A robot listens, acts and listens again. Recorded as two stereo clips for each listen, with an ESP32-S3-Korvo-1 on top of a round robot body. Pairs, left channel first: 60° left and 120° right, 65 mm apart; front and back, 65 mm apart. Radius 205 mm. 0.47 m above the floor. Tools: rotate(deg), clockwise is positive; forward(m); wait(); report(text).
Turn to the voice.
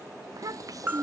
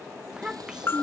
rotate(100)
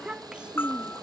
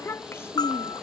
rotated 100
rotate(45)
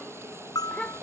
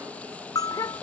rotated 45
rotate(15)
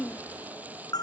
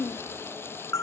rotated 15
report("Found it: a child speaking, straight ahead.")